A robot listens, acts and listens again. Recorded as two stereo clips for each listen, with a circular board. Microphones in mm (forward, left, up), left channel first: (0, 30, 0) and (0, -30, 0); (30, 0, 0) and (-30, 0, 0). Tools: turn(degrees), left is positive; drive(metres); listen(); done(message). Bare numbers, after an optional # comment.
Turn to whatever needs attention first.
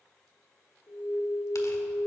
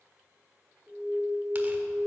# The alarm: 90° left.
turn(90)
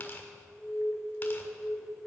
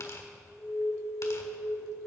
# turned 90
done("Found it: an alarm, straight ahead.")